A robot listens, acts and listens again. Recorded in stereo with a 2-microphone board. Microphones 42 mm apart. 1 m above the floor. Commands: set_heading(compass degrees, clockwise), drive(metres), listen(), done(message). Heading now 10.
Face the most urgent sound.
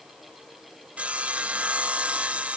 listen()
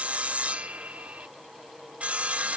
listen()
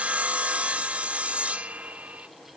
done("I can't make out anything urgent to turn to.")